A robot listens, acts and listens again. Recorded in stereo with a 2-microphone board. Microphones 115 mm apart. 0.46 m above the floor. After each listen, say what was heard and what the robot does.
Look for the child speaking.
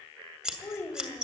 The child speaking: about 20° left or 160° left. Turn 20° left.
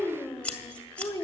The child speaking: about 25° left or 155° left. Turn 25° left.
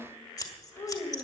The child speaking: about 25° left or 155° left. Turn 25° left.
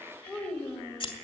The child speaking: about 15° left or 165° left. Turn 15° left.
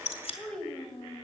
Turn 30° left.
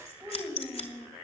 So it is at 20° right. Turn 20° right.
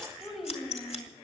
Facing the child speaking, 2 to 4 m away.